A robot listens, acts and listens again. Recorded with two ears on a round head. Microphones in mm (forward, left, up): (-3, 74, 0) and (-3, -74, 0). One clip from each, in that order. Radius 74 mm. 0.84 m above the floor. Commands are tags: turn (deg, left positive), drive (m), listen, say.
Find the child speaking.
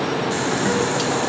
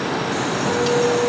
<listen/>
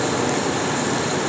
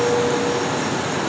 <listen/>
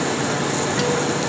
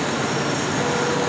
<say>I can't make out a child speaking to turn to.</say>